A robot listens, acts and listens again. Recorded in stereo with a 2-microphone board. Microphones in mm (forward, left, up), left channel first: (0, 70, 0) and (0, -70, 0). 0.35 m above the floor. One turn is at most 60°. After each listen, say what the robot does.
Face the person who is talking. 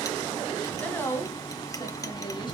Turn 20° left.
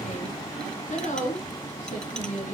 Turn 60° left.
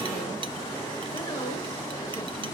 Turn 45° left.
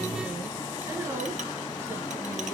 Keep listening.
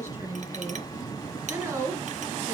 Turn 15° right.
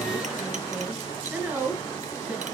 Found it: a woman speaking, straight ahead, over 4 m away.